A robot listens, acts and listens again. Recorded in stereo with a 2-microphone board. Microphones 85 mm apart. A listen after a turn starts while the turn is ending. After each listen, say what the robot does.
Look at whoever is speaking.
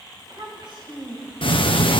Turn 90° right.
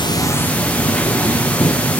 Keep listening.
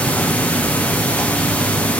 Keep listening.
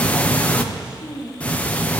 Turn 10° right.
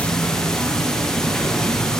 Keep listening.
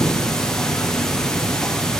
Keep listening.
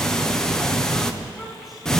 Facing where the child speaking came from. I can't hear it now.